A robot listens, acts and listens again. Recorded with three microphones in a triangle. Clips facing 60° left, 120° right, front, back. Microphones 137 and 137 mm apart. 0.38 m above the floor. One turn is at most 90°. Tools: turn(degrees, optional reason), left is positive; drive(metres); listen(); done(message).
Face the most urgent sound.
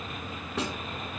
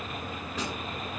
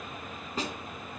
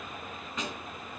listen()
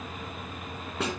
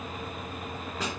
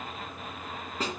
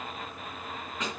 listen()
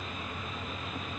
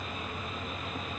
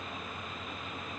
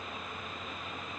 done("I can't make out anything urgent to turn to.")